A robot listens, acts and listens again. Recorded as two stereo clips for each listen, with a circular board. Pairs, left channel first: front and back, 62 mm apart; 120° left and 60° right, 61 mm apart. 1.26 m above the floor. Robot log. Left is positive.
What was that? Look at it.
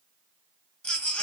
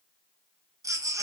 note: The baby crying: 70° right.
cmd yaw -70
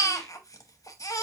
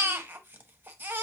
end: Facing the baby crying, under 1 m away.